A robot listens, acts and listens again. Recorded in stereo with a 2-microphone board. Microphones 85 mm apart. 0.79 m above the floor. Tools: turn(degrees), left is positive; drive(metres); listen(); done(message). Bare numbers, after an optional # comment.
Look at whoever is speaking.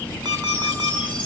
listen()
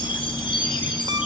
listen()
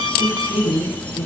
# The woman speaking: about 30° left or 150° left.
turn(30)
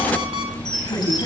# So it is at 120° left.
turn(120)
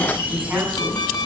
listen()
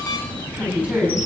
# The woman speaking is now 15° right.
turn(-15)
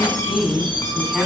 done("Found it: a woman speaking, straight ahead, over 4 m away.")